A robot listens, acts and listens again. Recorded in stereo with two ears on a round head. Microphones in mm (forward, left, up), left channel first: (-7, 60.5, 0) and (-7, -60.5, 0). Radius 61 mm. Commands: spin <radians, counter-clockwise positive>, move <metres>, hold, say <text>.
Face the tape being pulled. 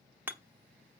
hold
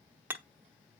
hold
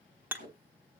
spin -1.05
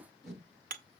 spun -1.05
say Facing the tape being pulled.